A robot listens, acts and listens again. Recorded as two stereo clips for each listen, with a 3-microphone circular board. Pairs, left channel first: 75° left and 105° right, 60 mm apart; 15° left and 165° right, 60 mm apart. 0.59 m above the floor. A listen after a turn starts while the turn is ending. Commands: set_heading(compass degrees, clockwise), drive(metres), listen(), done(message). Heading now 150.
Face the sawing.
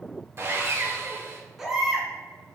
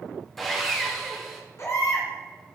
set_heading(220)
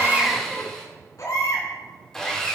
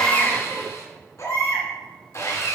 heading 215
done("Found it: sawing, straight ahead, 1 to 2 m away.")